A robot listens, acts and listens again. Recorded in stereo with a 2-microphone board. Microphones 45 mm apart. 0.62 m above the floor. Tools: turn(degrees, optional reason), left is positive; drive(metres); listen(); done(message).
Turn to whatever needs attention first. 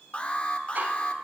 turn(degrees=25, reason="The alarm: about 25° left or 155° left.")
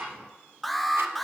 done("Facing the alarm, under 1 m away.")